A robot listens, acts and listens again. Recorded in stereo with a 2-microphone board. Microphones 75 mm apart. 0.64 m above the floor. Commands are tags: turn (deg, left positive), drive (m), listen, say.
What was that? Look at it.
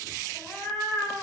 <turn deg="30"/>
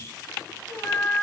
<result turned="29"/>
<turn deg="100"/>
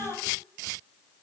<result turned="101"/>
<turn deg="-50"/>
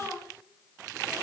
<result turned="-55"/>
<turn deg="-15"/>
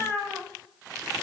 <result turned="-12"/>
<say>Found it: a cat meowing, straight ahead, 2 to 4 m away.</say>